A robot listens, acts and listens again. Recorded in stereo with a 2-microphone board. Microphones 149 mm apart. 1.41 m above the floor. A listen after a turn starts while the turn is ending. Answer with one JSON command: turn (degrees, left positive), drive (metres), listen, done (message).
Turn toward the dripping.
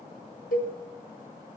{"listen": true}
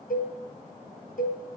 {"listen": true}
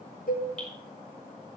{"turn": 30}
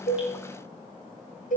{"listen": true}
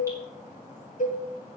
{"listen": true}
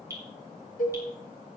{"turn": -20}
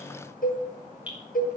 {"turn": -10}
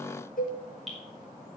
{"done": "Facing the dripping."}